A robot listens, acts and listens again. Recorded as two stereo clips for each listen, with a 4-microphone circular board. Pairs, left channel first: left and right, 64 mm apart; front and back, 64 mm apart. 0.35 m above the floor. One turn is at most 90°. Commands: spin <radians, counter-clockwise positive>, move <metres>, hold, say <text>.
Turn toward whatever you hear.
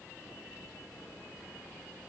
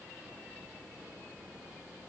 hold
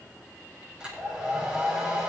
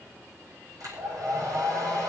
spin -1.57
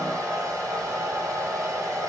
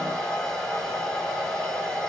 spin -1.40
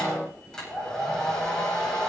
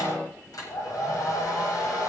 spin 0.17
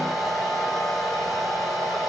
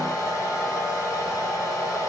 say Found it: a hair dryer, straight ahead.